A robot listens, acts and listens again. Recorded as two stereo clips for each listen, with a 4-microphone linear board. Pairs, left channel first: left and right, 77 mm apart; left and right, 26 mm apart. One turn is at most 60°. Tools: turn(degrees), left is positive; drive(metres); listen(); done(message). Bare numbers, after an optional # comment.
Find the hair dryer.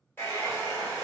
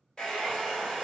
# The hair dryer: about 30° left or 150° left.
turn(30)
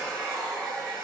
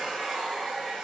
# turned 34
done("Found it: a hair dryer, straight ahead, 1 to 2 m away.")